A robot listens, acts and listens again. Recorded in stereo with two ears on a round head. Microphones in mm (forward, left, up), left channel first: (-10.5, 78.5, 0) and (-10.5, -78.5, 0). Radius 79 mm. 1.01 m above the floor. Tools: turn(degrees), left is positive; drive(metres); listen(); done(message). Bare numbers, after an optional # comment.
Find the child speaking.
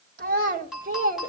# The child speaking: about 40° right or 140° right.
turn(-40)
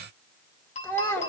# So it is at 10° left.
turn(10)
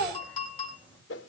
done("Facing the child speaking.")